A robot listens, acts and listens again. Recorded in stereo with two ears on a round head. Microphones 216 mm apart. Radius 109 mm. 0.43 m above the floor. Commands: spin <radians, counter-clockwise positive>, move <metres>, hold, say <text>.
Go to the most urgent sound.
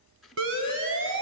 spin -0.96
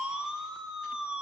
move 1.0
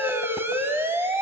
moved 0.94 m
spin -0.17
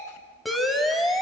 move 1.0
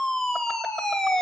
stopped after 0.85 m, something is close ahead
say Arrived at the siren, straight ahead.